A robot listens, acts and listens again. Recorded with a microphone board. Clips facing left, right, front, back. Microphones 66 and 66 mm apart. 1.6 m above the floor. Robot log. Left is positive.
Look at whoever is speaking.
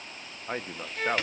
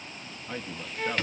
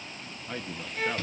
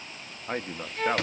note: The man speaking: 135° left.
cmd yaw +135
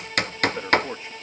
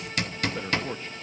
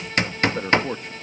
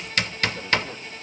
note: The man speaking is now 15° left.
cmd yaw +15
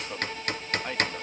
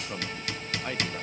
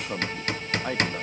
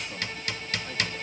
end: Facing the man speaking.